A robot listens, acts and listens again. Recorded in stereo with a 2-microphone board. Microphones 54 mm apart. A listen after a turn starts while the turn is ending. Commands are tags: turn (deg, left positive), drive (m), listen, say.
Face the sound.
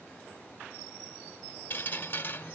<turn deg="40"/>
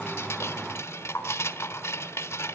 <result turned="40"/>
<turn deg="90"/>
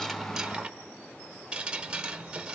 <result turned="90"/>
<turn deg="-20"/>
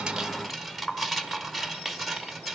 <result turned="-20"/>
<say>Found it: dripping, straight ahead, 1 to 2 m away.</say>